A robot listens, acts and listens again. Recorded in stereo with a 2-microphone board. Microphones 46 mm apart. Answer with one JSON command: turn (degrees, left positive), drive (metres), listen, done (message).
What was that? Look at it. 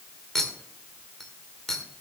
{"turn": 30}
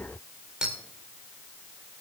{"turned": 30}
{"turn": -15}
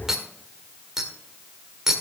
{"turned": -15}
{"done": "Facing the clink."}